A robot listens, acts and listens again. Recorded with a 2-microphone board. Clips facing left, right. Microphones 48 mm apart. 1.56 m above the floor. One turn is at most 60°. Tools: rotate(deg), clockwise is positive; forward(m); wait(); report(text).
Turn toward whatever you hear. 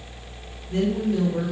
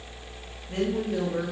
rotate(60)
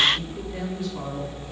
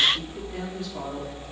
rotate(35)
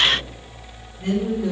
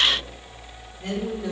rotate(-15)
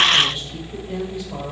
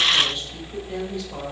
rotate(-10)
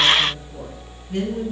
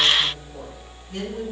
report("Found it: a woman speaking, straight ahead.")